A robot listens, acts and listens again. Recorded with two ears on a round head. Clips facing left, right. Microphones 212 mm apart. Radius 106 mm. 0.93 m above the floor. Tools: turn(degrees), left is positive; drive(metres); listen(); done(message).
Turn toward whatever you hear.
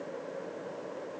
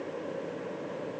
listen()
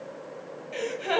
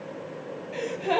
turn(degrees=25)
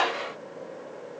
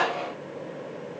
turn(degrees=125)
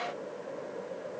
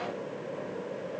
done("Facing where the gasp came from. I can't hear it now.")